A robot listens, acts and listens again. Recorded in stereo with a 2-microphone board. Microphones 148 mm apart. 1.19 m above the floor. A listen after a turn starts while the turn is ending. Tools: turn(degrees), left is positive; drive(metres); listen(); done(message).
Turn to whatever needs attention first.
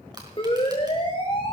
turn(degrees=35)
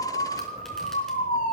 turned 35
turn(degrees=110)
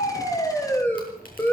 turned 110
turn(degrees=15)
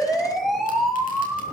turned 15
done("Found it: a siren, straight ahead.")